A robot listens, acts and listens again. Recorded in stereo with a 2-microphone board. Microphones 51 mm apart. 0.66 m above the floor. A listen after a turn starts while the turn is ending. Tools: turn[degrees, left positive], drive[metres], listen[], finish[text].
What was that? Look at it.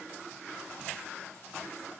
Action: listen[]
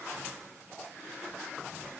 Action: listen[]
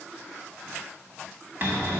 Thought: The cupboard door: about 40° right or 140° right.
Action: turn[-40]
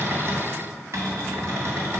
Thought: So it is at 100° right.
Action: turn[-100]
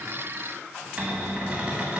Thought: The cupboard door is now 25° right.
Action: turn[-25]
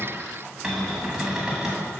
Thought: The cupboard door is now 10° right.
Action: turn[-10]
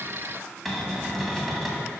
Action: finish[Found it: a cupboard door, straight ahead, 1 to 2 m away.]